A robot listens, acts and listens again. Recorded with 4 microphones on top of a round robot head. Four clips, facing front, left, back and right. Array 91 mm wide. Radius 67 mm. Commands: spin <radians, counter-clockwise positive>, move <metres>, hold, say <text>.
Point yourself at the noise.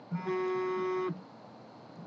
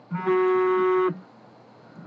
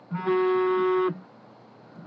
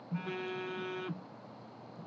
spin 2.09
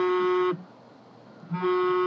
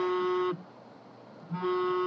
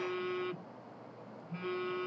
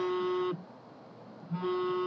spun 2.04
say Facing the phone buzzing.